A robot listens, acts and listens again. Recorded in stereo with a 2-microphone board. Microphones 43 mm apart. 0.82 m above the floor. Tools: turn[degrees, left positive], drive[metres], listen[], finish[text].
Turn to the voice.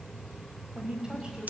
Thought: The woman speaking: about 15° right or 165° right.
Action: turn[-15]
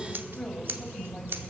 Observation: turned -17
Action: turn[30]
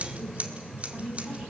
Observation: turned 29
Thought: So it is at 25° right.
Action: turn[-25]
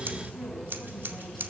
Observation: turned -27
Action: listen[]
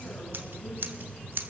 Action: listen[]
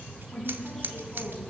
Action: finish[Found it: a woman speaking, straight ahead, over 4 m away.]